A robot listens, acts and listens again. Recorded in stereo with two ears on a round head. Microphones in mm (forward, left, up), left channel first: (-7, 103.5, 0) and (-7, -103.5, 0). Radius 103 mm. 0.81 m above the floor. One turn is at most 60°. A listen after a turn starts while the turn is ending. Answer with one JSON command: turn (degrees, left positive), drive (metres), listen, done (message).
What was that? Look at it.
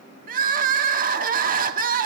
{"turn": -40}
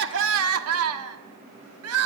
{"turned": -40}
{"turn": -60}
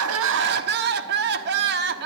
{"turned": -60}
{"turn": -50}
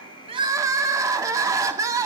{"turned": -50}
{"turn": -15}
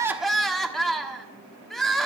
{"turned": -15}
{"done": "Facing the crying, 1 to 2 m away."}